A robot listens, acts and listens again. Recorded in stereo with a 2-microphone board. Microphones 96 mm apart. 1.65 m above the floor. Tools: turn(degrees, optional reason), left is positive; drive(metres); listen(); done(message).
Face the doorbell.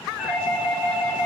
turn(degrees=30)
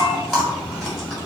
listen()
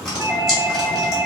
turn(degrees=-25, reason="So it is at 25° right.")
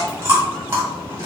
listen()
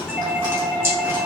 turn(degrees=10, reason="The doorbell is now 10° left.")
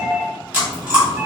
done("Facing the doorbell.")